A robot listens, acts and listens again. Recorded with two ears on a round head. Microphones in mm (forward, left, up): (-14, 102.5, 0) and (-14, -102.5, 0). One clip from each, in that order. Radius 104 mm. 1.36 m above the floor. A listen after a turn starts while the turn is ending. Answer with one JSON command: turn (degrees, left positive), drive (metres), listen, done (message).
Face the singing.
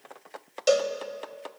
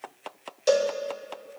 {"listen": true}
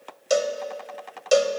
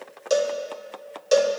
{"listen": true}
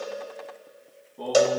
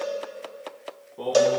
{"turn": -70}
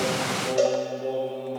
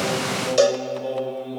{"done": "Facing the singing."}